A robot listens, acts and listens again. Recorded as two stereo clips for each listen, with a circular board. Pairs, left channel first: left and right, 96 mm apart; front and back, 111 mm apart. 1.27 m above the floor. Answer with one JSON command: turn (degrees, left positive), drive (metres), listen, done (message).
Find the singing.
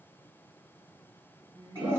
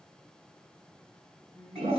{"turn": -65}
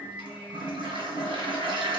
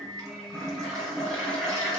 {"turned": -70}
{"turn": -15}
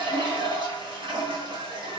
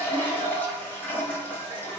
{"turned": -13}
{"listen": true}
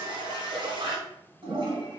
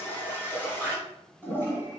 {"listen": true}
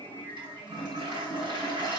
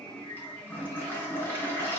{"turn": -65}
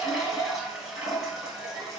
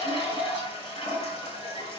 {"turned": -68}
{"listen": true}
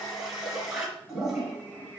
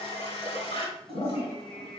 {"done": "Found it: singing, straight ahead, 1 to 2 m away."}